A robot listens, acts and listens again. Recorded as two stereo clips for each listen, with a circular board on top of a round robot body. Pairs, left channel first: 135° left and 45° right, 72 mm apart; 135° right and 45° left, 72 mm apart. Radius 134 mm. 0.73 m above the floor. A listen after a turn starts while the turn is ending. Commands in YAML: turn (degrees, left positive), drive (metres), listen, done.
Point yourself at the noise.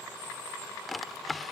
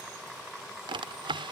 turn: 45
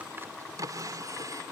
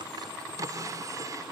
done: "Found it: a drawer, straight ahead."